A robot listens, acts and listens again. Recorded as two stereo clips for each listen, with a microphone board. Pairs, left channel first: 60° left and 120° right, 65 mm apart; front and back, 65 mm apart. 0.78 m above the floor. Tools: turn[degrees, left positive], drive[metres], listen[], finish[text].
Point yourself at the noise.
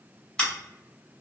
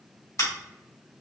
Thought: The scissors: 10° right.
Action: turn[-10]
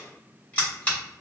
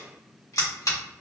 Action: finish[Found it: scissors, straight ahead, 1 to 2 m away.]